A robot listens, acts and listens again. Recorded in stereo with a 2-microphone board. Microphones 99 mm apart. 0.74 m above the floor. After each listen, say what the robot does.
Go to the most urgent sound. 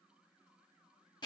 Keep listening.
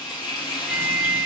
Turn 30° right.
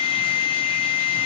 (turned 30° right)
Turn 145° right.
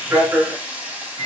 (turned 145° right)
Turn 30° right.
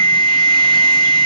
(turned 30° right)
Drive 1.0 m forward.
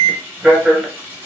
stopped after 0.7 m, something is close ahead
Turn 15° right.
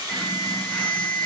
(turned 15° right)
Arrived at the alarm, straight ahead.